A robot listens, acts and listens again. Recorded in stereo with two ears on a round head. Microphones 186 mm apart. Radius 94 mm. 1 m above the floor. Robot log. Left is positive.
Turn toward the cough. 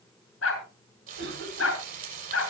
note: The cough: about 65° right or 115° right.
cmd yaw -65
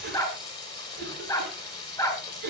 note: So it is at 55° right.
cmd yaw -55
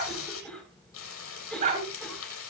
end: Facing the cough.